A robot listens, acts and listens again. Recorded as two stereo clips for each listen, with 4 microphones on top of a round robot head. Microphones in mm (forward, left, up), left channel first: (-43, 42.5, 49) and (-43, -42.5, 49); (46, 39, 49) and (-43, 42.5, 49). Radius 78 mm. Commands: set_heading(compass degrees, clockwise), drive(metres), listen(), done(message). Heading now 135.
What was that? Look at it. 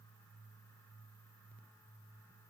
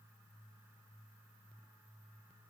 listen()
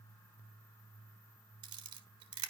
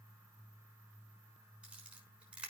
set_heading(235)
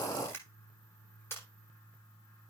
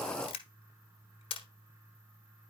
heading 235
set_heading(215)
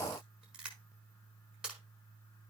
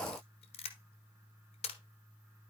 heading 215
done("Found it: a camera shutter, straight ahead.")